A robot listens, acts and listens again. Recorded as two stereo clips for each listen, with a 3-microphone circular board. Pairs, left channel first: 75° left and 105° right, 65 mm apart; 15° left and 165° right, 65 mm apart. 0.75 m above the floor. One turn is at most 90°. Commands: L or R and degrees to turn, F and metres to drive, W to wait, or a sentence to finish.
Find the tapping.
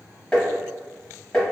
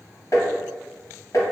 Facing the tapping, under 1 m away.